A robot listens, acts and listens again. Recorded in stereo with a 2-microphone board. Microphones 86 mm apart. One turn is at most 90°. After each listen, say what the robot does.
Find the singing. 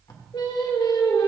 Turn 60° left.
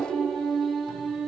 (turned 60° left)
Found it: singing, straight ahead, 2 to 4 m away.